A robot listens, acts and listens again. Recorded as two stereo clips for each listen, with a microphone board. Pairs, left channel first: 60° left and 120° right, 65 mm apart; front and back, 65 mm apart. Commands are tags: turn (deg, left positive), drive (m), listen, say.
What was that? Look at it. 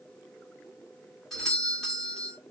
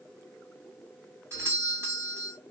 <turn deg="145"/>
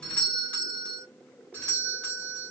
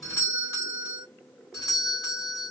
<say>Found it: a doorbell, straight ahead.</say>